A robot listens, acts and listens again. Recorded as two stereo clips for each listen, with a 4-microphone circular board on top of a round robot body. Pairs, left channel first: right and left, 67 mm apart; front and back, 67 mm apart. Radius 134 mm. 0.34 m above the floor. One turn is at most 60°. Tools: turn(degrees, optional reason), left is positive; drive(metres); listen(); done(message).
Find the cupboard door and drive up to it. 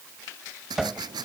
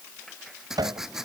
turn(degrees=60, reason="The cupboard door: straight behind.")
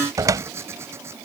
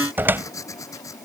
turn(degrees=60, reason="The cupboard door is now 120° left.")
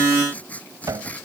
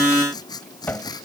turn(degrees=60, reason="The cupboard door is now 60° left.")
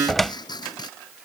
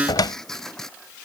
drive(metres=1.0)
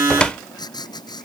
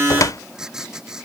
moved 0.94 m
turn(degrees=-15, reason="The cupboard door is now 15° right.")
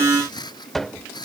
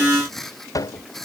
drive(metres=1.0)
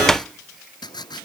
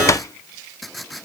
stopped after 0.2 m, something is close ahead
turn(degrees=-10, reason="The cupboard door is now 10° right.")
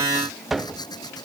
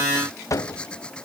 done("I am next to the cupboard door.")